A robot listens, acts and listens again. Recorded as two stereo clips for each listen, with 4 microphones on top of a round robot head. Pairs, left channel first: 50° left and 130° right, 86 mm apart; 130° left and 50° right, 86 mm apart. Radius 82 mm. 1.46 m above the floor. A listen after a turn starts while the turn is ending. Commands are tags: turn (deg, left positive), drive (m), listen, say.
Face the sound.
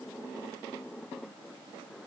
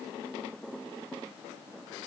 <listen/>
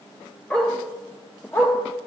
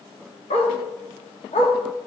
<turn deg="115"/>
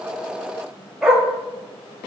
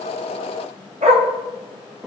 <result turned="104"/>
<turn deg="-55"/>
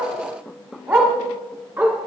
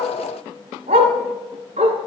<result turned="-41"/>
<turn deg="-55"/>
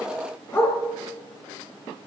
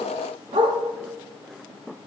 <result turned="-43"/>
<turn deg="-10"/>
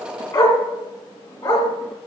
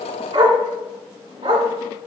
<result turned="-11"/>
<say>Found it: a dog barking, straight ahead.</say>